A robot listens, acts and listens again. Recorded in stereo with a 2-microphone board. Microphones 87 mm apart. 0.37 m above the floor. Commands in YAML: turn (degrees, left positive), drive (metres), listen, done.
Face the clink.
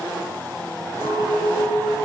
turn: 25
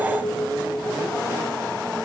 turn: 125
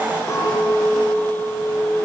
turn: 40
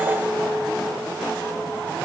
done: "Found it: a clink, straight ahead, over 4 m away."